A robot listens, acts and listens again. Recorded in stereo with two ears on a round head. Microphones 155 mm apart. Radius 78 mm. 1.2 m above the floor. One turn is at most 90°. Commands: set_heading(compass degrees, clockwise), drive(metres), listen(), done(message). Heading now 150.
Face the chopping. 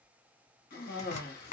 set_heading(110)
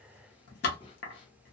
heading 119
set_heading(29)
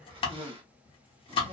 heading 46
set_heading(11)
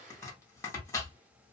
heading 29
set_heading(9)
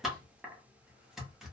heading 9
done("Facing the chopping, under 1 m away.")